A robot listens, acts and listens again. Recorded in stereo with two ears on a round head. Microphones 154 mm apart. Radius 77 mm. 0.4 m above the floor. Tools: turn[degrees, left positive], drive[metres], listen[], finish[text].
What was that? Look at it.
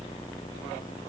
Action: listen[]
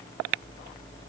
Action: listen[]
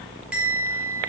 Action: turn[-30]
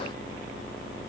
Action: listen[]
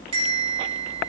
Thought: So it is at 150° right.
Action: turn[-150]
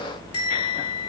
Thought: The bell is now 30° left.
Action: turn[30]
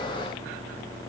Action: listen[]
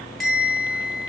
Action: finish[Found it: a bell, straight ahead.]